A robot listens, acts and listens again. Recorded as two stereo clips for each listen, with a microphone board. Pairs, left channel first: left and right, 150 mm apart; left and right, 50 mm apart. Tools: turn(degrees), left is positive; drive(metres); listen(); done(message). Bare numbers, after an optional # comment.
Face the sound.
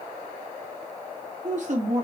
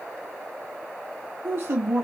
# The woman speaking: about 50° right or 130° right.
turn(-50)
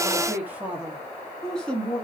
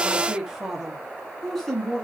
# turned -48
# So it is at 15° left.
turn(15)
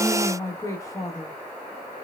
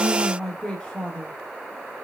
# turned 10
# The woman speaking is now 25° left.
turn(25)
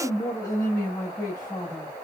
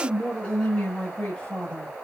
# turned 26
# The woman speaking is now 25° left.
turn(25)
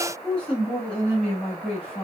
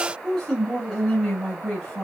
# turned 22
# The woman speaking is now 10° left.
turn(10)
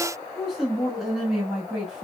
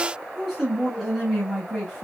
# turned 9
done("Facing the woman speaking.")